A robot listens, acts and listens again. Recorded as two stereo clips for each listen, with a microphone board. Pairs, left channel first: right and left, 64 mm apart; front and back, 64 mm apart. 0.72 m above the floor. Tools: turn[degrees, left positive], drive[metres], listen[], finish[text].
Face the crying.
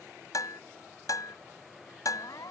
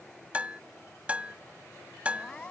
Thought: The crying: 75° right.
Action: turn[-75]
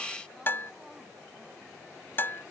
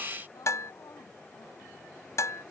Action: listen[]
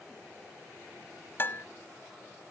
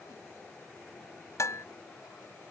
Action: listen[]
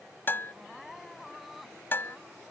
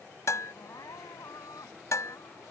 Action: finish[Found it: crying, straight ahead.]